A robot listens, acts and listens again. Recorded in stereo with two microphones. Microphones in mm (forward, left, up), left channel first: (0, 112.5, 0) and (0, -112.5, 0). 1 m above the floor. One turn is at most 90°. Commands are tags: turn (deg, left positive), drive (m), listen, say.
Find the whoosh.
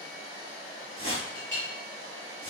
<turn deg="-65"/>
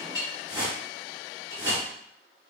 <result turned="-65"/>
<turn deg="-20"/>
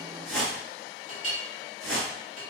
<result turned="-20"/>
<say>Found it: a whoosh, straight ahead, 1 to 2 m away.</say>